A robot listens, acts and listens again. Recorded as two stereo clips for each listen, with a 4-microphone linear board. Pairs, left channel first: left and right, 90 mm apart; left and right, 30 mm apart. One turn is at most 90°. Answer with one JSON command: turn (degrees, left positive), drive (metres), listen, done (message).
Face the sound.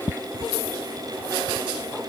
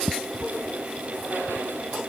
{"listen": true}
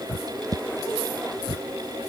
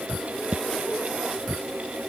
{"listen": true}
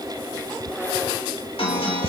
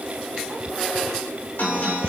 {"turn": 90}
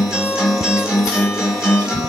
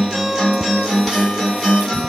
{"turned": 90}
{"done": "Facing the guitar."}